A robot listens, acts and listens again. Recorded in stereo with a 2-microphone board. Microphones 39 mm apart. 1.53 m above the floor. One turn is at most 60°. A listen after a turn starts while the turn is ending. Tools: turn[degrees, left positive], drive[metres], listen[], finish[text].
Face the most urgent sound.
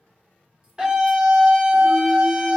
Thought: The scream: about 25° right or 155° right.
Action: turn[-25]
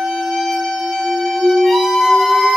Action: finish[Found it: a scream, straight ahead, under 1 m away.]